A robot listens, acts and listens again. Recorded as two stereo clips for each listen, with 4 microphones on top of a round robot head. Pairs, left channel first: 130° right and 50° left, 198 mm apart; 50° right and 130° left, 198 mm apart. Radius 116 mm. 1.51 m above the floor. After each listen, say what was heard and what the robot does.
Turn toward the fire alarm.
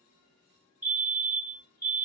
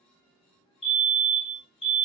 Facing the fire alarm, 1 to 2 m away.